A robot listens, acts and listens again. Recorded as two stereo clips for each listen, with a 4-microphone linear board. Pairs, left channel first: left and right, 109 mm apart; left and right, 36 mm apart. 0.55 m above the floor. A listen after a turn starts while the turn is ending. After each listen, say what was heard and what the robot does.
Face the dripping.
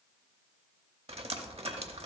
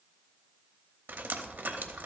The dripping: about 70° right or 110° right. Turn 70° right.
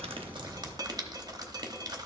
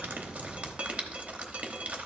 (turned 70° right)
So it is at 40° right. Turn 40° right.
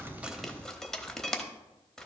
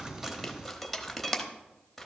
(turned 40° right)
Found it: dripping, straight ahead.